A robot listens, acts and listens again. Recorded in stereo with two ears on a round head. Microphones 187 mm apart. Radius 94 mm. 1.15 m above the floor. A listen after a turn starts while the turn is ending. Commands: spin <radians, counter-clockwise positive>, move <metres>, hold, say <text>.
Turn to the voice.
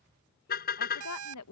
spin 1.57
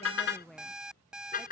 say Facing the woman speaking.